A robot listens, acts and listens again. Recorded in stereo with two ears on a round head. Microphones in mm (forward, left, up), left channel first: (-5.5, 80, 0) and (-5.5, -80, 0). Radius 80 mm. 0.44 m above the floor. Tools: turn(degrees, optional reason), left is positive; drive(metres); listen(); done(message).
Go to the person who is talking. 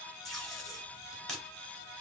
listen()
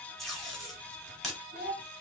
turn(degrees=-50, reason="The child speaking: about 50° right or 130° right.")
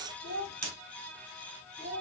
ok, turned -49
turn(degrees=-80, reason="So it is at 80° right.")
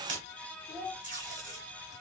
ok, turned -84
drive(metres=1.0)
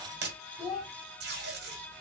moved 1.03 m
drive(metres=1.0)
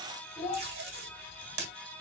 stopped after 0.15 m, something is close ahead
turn(degrees=15, reason="The child speaking is now 15° left.")
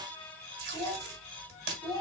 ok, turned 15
done("I am next to the child speaking.")